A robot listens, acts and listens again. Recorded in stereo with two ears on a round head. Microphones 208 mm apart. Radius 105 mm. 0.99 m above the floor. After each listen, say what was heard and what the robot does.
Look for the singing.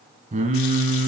The singing: about 35° right or 145° right. Turn 35° right.
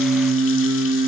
So it is at 115° right. Turn 115° right.
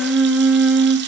Found it: singing, straight ahead.